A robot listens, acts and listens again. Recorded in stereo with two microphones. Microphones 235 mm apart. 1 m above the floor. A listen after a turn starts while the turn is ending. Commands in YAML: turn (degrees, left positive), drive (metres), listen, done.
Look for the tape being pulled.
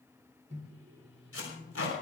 turn: 70
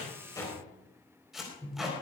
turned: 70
done: "Found it: tape being pulled, straight ahead."